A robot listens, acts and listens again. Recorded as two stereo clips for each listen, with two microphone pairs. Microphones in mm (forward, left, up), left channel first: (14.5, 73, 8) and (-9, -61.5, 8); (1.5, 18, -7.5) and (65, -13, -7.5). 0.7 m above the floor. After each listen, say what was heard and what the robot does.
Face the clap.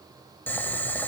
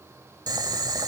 Keep listening.
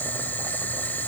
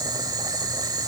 Keep listening.
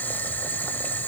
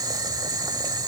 I can't make out a clap, only boiling.